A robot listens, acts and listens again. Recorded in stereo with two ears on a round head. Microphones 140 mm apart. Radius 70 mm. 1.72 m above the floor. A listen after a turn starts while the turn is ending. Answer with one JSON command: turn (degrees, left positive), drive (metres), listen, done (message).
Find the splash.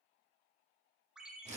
{"listen": true}
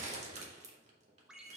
{"listen": true}
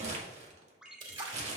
{"turn": -30}
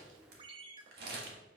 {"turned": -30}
{"listen": true}
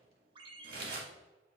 {"done": "I heard a splash, but can't make it out now. It was about straight ahead or 120° right."}